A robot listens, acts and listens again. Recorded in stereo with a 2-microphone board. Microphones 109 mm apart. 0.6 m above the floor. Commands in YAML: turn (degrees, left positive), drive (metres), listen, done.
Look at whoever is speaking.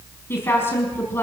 turn: 20
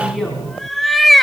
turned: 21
done: "Found it: a woman speaking, straight ahead."